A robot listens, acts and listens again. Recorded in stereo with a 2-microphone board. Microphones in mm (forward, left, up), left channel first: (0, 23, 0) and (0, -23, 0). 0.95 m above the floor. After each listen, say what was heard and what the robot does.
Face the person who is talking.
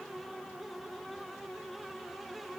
Keep listening.
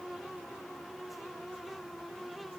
Keep listening.
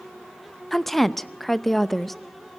Turn 30° left.
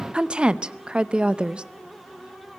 So it is at 25° right. Turn 25° right.
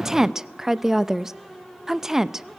The woman speaking is now 15° right. Turn 15° right.
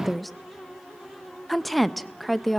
Facing the woman speaking, under 1 m away.